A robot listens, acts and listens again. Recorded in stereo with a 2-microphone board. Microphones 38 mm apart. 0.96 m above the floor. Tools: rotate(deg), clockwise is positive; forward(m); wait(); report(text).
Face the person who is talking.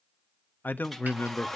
rotate(-60)
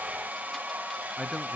wait()
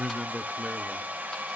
report("Facing the man speaking.")